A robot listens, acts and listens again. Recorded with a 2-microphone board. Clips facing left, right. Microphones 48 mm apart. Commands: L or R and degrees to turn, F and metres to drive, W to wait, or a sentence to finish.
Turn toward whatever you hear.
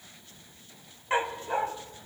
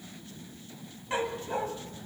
L30
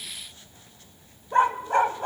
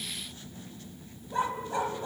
L115
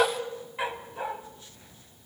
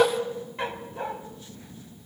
Found it: a dog barking, straight ahead.